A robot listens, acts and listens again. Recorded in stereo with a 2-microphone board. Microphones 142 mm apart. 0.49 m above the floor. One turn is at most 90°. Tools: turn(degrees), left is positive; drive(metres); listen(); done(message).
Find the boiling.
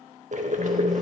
turn(degrees=-60)
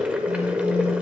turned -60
turn(degrees=-10)
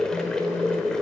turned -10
done("Found it: boiling, straight ahead.")